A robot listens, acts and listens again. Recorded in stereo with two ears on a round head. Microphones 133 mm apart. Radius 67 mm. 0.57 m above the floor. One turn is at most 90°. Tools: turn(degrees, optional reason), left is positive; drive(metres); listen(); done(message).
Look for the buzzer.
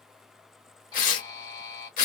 turn(degrees=25, reason="The buzzer: about 25° left or 155° left.")
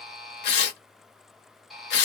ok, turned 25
done("Facing the buzzer.")